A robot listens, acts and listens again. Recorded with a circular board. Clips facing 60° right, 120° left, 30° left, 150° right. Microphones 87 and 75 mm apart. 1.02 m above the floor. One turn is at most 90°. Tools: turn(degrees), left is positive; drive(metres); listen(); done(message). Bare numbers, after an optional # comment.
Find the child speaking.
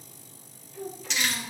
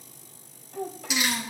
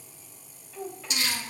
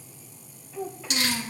# The child speaking: 120° left.
turn(90)
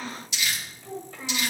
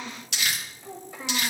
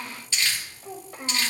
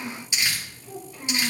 # The child speaking is now 45° left.
turn(45)
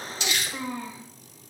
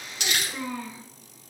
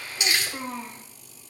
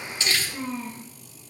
done("Found it: a child speaking, straight ahead.")